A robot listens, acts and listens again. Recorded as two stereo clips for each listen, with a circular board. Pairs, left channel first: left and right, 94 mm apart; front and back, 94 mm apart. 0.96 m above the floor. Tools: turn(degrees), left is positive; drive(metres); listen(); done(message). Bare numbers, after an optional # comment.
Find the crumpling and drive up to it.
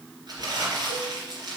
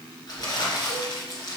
# The crumpling: 50° right.
turn(-50)
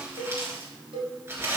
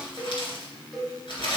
# The crumpling is now 25° right.
turn(-25)
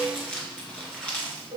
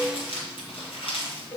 # The crumpling is now 10° left.
turn(10)
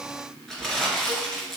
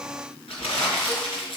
drive(1.0)
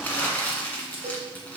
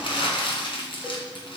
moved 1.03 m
# The crumpling is now 15° left.
turn(15)
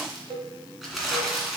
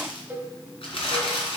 drive(1.0)
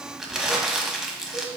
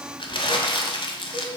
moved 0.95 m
drive(1.0)
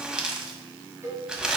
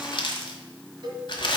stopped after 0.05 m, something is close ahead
# The crumpling is now 10° right.
turn(-10)
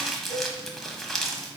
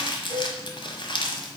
done("Arrived at the crumpling, straight ahead.")